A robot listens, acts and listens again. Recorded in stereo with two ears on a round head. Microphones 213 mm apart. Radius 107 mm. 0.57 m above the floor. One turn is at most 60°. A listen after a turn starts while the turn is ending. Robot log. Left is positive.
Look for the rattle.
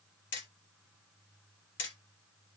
cmd idle
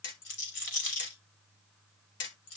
note: The rattle: about 55° left or 125° left.
cmd yaw +55
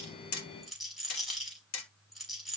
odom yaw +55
end: Found it: a rattle, straight ahead, over 4 m away.